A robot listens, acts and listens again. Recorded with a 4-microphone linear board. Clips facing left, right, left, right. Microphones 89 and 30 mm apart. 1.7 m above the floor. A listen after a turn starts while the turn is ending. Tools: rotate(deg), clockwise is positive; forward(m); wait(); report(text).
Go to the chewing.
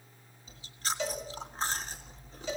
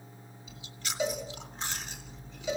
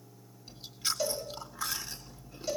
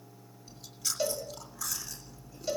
rotate(-35)
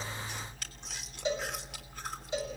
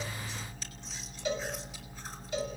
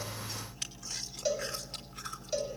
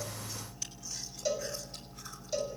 rotate(-105)
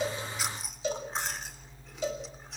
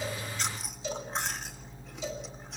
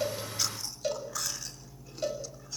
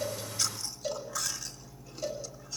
forward(1.0)
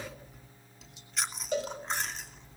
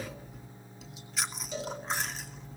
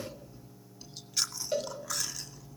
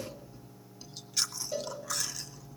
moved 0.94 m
forward(1.0)
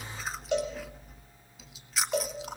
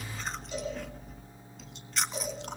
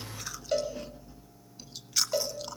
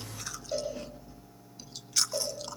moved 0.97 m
forward(1.0)
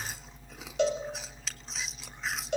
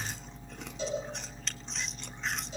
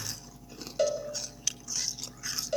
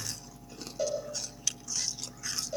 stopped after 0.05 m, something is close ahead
report("I am next to the chewing.")